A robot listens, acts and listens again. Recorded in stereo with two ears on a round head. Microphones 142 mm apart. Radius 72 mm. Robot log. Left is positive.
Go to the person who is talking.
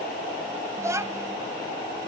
note: The child speaking: about 20° right or 160° right.
cmd yaw -20
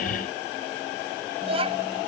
note: So it is at 140° right.
cmd yaw -140
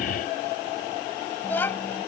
note: The child speaking is now 10° left.
cmd yaw +10
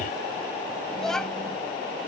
cmd fwd 1.0
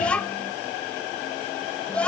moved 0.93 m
cmd fwd 1.0
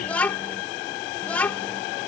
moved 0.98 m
note: The child speaking is now 10° left.
cmd yaw +10
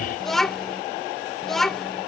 cmd fwd 1.0
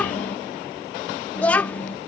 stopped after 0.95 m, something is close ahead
note: The child speaking is now 10° left.
cmd yaw +10
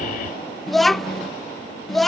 end: Arrived at the child speaking, straight ahead.